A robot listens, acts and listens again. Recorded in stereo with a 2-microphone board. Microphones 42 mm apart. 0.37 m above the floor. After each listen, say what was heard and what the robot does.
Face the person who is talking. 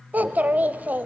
The child speaking: about 40° right or 140° right. Turn 40° right.
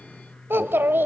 So it is at 90° right. Turn 90° right.
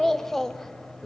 The child speaking is now 10° left. Turn 10° left.
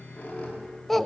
Found it: a child speaking, straight ahead.